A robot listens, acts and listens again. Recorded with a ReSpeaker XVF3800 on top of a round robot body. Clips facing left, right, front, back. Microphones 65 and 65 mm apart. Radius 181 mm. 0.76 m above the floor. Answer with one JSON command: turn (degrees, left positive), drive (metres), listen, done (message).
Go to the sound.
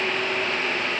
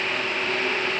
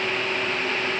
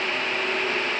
{"listen": true}
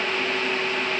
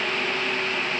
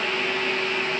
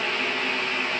{"listen": true}
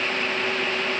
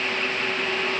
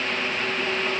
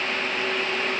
{"done": "I can't make out anything."}